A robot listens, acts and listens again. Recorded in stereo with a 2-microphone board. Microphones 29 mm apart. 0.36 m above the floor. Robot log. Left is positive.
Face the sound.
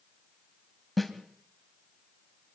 cmd yaw +30
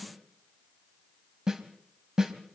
note: So it is at 20° right.
cmd yaw -20
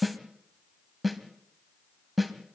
end: Facing the snare drum.